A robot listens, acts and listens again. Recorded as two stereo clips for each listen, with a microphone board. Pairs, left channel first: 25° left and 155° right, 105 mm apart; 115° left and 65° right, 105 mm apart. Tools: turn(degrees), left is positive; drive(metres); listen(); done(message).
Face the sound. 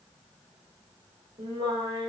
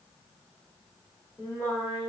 turn(degrees=175)
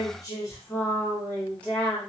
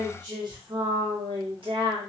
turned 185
turn(degrees=-60)
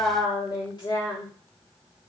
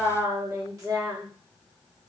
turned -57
turn(degrees=-20)
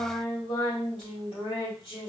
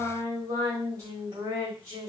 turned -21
turn(degrees=-10)
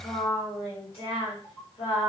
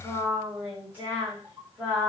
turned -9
done("Found it: singing, straight ahead, 1 to 2 m away.")